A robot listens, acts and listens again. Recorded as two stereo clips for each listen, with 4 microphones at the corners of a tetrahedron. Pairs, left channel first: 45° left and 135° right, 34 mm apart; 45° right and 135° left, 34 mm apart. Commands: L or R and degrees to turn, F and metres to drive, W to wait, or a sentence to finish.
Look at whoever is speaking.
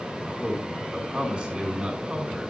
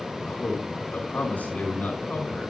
R80
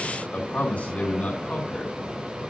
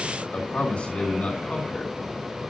Found it: a man speaking, straight ahead.